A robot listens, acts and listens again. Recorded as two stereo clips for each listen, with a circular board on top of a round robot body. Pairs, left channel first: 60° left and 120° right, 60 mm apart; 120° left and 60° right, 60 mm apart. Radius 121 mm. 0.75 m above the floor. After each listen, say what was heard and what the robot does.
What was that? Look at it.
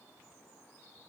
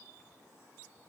Keep listening.
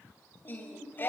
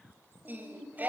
Facing the singing.